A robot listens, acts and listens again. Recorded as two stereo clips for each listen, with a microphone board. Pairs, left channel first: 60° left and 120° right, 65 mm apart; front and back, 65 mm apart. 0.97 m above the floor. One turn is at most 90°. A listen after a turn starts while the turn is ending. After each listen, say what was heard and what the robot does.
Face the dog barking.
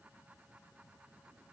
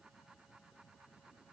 Keep listening.
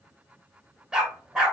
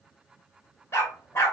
The dog barking: 45° right. Turn 45° right.
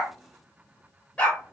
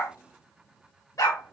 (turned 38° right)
The dog barking is now 10° right. Turn 10° right.
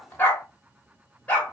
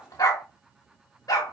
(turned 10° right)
Facing the dog barking.